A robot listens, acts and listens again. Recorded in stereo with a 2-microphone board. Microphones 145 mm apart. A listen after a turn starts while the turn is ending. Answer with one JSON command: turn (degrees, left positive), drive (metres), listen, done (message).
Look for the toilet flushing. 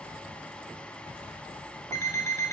{"listen": true}
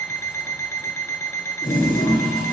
{"turn": 70}
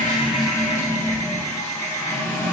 {"turn": 25}
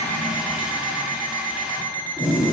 {"done": "Found it: a toilet flushing, straight ahead."}